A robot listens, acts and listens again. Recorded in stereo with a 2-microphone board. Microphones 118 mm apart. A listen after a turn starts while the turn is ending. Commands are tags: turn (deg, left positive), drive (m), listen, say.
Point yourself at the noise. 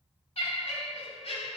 <turn deg="65"/>
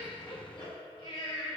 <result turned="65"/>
<turn deg="50"/>
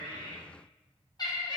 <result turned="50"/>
<turn deg="40"/>
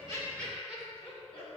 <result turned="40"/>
<turn deg="10"/>
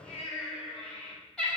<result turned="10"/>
<say>Facing the laughter.</say>